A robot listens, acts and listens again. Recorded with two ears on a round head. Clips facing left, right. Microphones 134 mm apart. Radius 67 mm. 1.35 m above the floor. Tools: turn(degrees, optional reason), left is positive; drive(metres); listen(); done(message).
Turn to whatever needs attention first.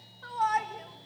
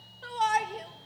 turn(degrees=-35, reason="The shout: about 35° right or 145° right.")
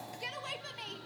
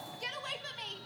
done("Found it: a shout, straight ahead.")